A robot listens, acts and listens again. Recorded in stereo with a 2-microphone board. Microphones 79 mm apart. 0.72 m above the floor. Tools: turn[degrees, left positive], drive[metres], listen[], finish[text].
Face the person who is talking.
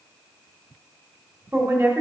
Thought: The woman speaking: about 35° right or 145° right.
Action: turn[-35]
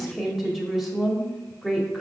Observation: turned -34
Action: finish[Facing the woman speaking.]